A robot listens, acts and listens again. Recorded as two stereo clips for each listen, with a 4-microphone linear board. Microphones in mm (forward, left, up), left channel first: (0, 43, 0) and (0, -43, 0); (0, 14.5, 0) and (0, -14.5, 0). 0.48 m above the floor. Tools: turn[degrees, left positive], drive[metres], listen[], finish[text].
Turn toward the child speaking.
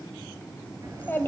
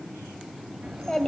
Thought: The child speaking: about 25° left or 155° left.
Action: turn[25]
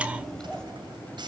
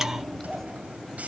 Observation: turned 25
Action: turn[30]
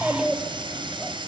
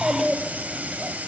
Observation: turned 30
Action: finish[Found it: a child speaking, straight ahead.]